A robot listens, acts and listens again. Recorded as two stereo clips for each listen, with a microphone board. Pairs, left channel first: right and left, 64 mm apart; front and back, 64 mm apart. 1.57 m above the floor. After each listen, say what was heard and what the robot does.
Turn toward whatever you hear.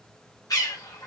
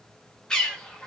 The bird: 75° right. Turn 75° right.
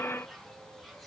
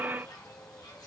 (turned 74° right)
Keep listening.
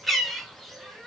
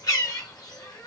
Found it: a bird, straight ahead, 1 to 2 m away.